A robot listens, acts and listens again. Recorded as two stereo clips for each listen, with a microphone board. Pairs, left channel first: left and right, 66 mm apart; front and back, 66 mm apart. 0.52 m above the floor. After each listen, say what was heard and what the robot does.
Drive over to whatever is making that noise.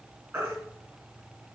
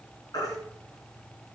The baby crying: 20° right. Turn 20° right.
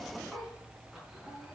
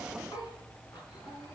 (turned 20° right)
Keep listening.
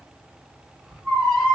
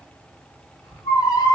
Drive 1.0 m forward.
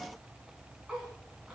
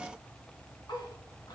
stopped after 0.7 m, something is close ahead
Keep listening.
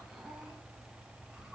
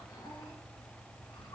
Keep listening.
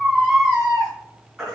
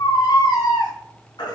Blocked. The baby crying is further on, straight ahead.